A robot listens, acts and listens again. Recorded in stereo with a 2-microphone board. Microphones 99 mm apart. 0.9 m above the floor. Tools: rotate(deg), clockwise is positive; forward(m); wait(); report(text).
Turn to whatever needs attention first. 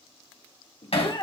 rotate(-50)
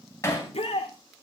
rotate(-80)
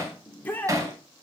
rotate(-20)
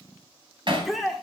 report("Facing the shout.")